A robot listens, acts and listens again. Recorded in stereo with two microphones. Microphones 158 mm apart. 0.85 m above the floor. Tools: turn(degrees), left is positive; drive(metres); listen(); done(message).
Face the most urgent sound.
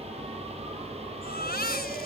turn(degrees=90)
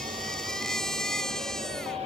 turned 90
done("Facing the baby crying.")